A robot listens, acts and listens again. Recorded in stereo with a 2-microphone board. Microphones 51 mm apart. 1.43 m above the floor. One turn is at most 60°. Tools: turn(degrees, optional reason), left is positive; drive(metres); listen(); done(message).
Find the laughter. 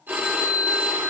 listen()
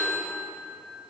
listen()
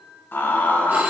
turn(degrees=35, reason="The laughter: about 35° left or 145° left.")
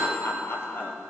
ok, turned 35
turn(degrees=40, reason="The laughter: about 40° left or 140° left.")
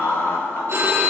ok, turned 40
turn(degrees=60, reason="So it is at 130° left.")
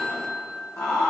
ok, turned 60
turn(degrees=60, reason="The laughter is now 75° left.")
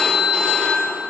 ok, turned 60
turn(degrees=15, reason="Nothing new. It was at 15° left.")
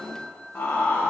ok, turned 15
turn(degrees=50, reason="The laughter is now 50° left.")
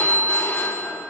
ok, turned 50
listen()
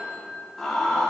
done("Facing the laughter, 1 to 2 m away.")